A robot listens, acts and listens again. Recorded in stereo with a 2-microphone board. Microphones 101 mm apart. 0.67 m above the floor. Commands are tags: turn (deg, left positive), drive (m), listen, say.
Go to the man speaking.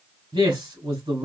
<turn deg="-70"/>
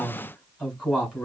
<turn deg="-10"/>
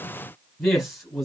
<drive m="1.0"/>
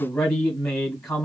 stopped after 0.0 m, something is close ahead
<say>Something is in my way. I am facing the man speaking but have not reached it.</say>